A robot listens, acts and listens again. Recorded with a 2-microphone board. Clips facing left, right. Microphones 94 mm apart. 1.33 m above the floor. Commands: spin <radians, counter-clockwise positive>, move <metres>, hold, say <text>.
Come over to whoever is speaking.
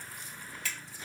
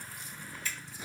hold
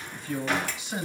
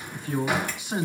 spin -0.96
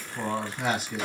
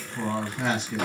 move 1.0
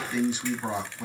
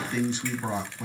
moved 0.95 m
move 1.0
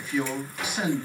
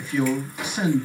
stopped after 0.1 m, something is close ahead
say Arrived at the man speaking, straight ahead.